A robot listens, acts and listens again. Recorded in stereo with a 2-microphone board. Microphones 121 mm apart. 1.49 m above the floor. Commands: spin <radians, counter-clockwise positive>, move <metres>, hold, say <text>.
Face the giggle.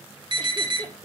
spin -0.70
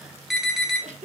spin -1.66
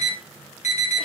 hold
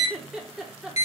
say Facing the giggle, 1 to 2 m away.